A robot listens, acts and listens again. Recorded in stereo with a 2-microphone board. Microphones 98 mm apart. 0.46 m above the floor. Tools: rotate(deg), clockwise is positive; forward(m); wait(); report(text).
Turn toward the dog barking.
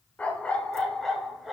rotate(30)
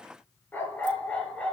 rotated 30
rotate(-10)
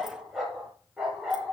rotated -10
rotate(10)
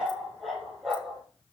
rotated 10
report("Found it: a dog barking, straight ahead.")